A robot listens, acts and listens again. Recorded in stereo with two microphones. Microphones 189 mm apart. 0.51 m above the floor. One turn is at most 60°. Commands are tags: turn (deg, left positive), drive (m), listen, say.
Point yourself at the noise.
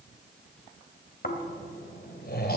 <turn deg="55"/>
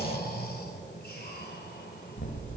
<turn deg="60"/>
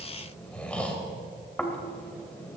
<say>Facing the snoring.</say>